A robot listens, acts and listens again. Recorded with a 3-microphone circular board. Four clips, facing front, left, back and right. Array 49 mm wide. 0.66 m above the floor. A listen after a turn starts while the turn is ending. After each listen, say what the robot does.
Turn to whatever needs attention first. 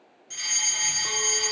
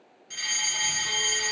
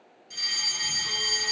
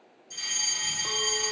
Turn 65° left.
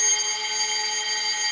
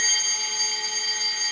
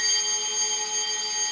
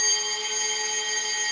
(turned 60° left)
Facing the fire alarm, over 4 m away.